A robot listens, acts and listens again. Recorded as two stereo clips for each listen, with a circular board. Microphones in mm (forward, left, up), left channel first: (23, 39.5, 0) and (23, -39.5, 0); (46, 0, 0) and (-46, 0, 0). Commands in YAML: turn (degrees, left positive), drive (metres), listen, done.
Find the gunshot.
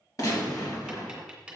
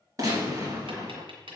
turn: 135
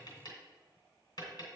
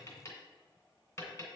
done: "Facing where the gunshot came from. I can't hear it now."